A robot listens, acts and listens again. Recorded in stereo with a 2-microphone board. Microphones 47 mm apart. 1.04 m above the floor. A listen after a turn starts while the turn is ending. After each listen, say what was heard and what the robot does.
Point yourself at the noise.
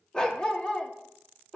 The dog barking: about 20° left or 160° left. Turn 20° left.
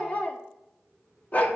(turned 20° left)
So it is at 135° left. Turn 135° left.
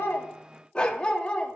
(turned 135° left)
The dog barking is now 25° left. Turn 25° left.
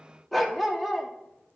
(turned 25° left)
Facing the dog barking.